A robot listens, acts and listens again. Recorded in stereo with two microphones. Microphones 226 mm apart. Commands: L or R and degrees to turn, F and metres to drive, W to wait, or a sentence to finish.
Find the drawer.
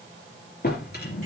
L45
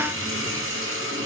W
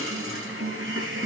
W
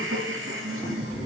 Found it: a drawer, straight ahead, 2 to 4 m away.